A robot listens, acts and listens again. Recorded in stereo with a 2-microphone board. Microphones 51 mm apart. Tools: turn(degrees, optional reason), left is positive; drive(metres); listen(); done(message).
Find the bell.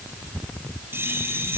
turn(degrees=-45, reason="The bell: about 45° right or 135° right.")
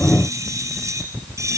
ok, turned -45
turn(degrees=-90, reason="So it is at 90° right.")
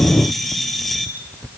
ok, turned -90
done("Facing the bell.")